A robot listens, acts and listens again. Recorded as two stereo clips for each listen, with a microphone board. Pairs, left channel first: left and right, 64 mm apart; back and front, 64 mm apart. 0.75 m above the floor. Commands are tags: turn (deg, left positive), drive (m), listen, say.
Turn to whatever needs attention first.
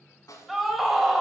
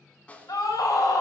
<turn deg="180"/>
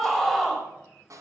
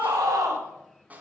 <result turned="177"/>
<say>Facing the scream.</say>